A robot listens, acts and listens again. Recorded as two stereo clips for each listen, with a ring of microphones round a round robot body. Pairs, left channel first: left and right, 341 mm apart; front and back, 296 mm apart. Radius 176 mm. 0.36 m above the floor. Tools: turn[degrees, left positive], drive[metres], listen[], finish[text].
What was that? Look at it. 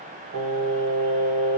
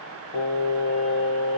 Thought: The singing: 30° right.
Action: turn[-30]
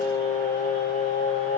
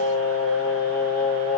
Thought: The singing is now 45° left.
Action: turn[45]
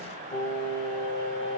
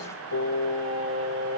Thought: The singing is now 35° left.
Action: turn[35]
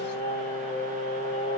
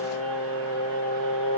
Thought: The singing is now 20° left.
Action: turn[20]
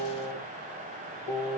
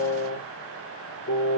Action: finish[Facing the singing.]